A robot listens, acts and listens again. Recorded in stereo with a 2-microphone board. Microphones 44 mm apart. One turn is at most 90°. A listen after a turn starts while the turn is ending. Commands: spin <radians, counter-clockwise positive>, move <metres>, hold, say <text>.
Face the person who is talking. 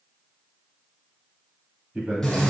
spin -0.52
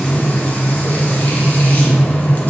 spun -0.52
hold
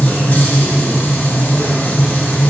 hold
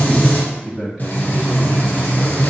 say Found it: a man speaking, straight ahead.